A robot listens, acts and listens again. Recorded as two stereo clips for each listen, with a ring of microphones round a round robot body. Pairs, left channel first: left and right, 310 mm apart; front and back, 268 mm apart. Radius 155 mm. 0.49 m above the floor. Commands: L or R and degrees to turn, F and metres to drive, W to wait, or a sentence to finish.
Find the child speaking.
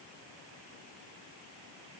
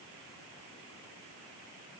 W
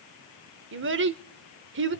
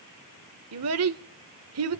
R140
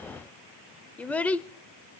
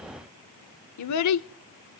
Facing the child speaking, under 1 m away.